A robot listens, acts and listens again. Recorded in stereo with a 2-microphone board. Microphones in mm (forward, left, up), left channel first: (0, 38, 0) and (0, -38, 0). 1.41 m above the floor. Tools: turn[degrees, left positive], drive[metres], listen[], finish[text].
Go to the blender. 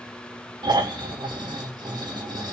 Action: listen[]
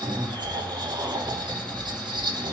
Action: listen[]
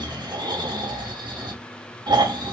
Action: finish[I can't make out a blender to turn to.]